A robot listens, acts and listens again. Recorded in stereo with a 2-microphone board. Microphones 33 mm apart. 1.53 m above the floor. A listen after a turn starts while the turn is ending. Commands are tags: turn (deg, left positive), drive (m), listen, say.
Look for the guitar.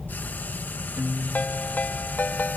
<turn deg="-60"/>
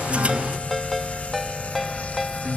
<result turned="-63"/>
<turn deg="-60"/>
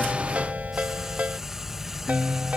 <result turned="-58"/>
<say>Found it: a guitar, straight ahead.</say>